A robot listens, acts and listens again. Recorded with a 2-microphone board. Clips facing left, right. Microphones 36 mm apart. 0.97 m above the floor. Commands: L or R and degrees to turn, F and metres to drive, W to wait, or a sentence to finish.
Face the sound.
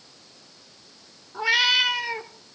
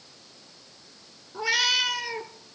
L25
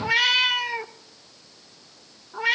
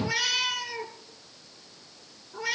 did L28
L125
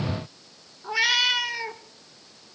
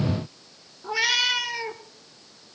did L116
L10
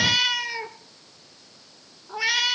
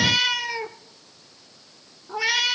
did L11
Facing the cat meowing, under 1 m away.